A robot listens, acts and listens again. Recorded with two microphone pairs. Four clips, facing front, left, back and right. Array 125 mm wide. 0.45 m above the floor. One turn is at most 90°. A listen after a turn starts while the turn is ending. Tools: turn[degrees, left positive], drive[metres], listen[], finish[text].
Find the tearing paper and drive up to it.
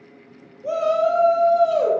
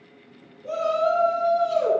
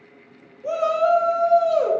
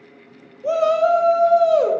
Action: listen[]
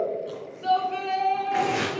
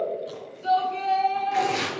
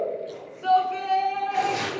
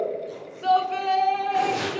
Action: drive[1.0]
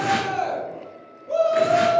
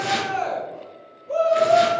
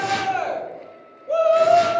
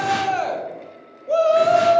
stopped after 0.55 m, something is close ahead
Action: listen[]
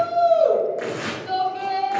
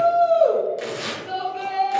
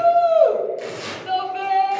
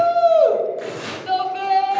Thought: The tearing paper is now 15° right.
Action: turn[-15]
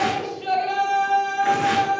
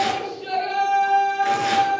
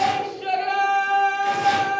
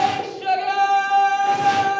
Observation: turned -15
Action: listen[]
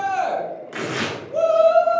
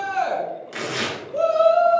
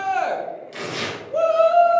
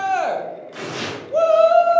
Action: finish[Blocked. The tearing paper is further on, straight ahead.]